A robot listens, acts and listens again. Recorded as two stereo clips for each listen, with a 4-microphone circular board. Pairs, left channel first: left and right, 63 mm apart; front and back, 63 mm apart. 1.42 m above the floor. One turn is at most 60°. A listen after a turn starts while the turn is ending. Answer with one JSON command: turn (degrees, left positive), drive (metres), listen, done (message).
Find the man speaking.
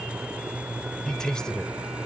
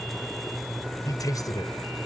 {"turn": 10}
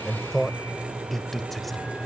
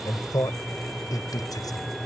{"done": "Found it: a man speaking, straight ahead."}